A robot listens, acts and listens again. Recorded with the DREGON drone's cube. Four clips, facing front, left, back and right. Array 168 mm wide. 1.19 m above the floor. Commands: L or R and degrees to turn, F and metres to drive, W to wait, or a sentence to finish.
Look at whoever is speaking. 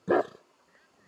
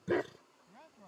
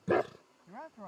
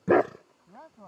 R155
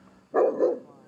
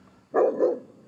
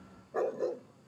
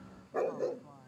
W
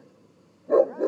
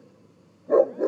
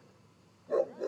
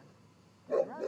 W
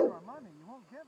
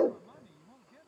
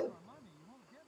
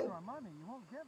R45
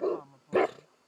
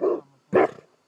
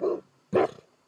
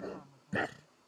L10
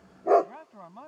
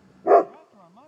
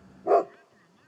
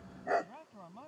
Facing the man speaking.